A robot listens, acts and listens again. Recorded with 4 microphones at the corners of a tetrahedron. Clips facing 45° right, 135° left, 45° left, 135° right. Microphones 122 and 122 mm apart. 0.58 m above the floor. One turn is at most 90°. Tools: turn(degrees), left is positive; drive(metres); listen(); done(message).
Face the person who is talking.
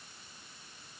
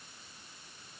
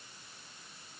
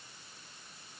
listen()
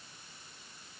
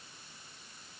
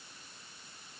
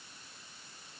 listen()
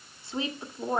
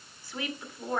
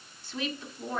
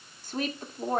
turn(degrees=-90)
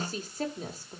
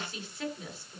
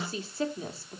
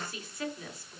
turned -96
done("Found it: a woman speaking, straight ahead, 1 to 2 m away.")